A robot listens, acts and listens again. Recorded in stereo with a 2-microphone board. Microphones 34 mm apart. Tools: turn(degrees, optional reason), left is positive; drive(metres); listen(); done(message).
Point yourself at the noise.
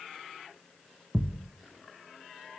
turn(degrees=-70, reason="The thud: about 70° right or 110° right.")
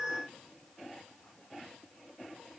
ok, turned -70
listen()
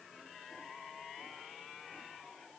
done("I heard a thud, but can't make it out now. It was about straight ahead or 40° right.")